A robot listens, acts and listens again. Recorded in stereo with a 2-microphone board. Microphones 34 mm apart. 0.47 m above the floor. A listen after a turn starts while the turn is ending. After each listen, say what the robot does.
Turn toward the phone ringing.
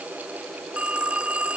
Turn 40° right.
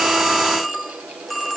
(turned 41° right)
Found it: a phone ringing, straight ahead.